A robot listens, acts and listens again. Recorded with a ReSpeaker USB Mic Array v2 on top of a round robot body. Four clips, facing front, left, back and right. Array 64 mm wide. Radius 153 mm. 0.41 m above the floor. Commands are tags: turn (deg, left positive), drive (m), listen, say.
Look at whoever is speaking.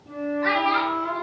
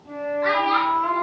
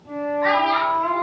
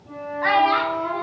<turn deg="-120"/>
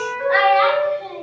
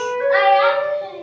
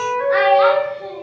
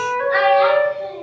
<turn deg="-10"/>
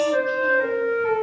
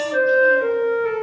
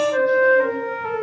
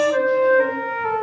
<listen/>
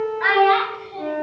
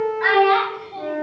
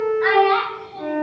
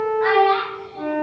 <turn deg="10"/>
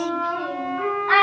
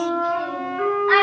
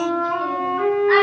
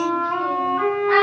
<turn deg="15"/>
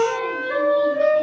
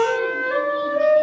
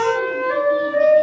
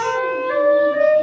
<listen/>
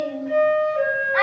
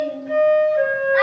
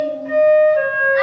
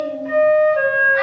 <listen/>
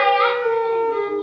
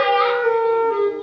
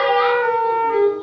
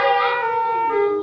<say>Facing the child speaking.</say>